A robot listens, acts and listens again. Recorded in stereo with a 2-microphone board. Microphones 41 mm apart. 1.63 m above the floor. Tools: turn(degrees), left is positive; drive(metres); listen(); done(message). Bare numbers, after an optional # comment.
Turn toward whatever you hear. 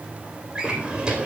# The drawer: about 25° right or 155° right.
turn(-25)
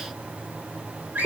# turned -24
# So it is at 130° right.
turn(-130)
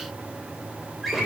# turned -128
done("Facing the drawer, 2 to 4 m away.")